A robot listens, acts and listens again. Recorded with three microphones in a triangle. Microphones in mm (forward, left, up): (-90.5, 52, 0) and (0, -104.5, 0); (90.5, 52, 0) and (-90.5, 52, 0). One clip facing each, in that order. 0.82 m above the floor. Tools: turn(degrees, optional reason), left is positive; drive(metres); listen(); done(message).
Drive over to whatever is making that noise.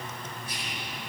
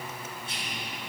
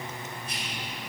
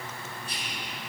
turn(degrees=-125, reason="The whispering: 125° right.")
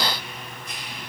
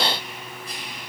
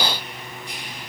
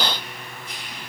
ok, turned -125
drive(metres=1.0)
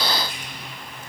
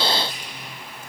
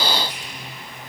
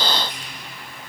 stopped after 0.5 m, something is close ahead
turn(degrees=-10, reason="The whispering is now 10° right.")
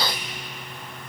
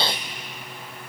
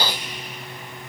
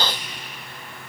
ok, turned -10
done("Blocked. The whispering is further on, straight ahead.")